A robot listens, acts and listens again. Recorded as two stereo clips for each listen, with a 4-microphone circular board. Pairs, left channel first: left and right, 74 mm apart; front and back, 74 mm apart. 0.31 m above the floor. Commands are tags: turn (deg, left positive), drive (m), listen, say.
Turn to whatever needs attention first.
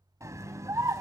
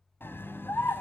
<turn deg="-55"/>
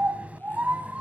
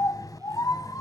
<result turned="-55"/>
<turn deg="-20"/>
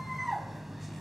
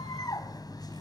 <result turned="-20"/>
<say>Found it: a scream, straight ahead.</say>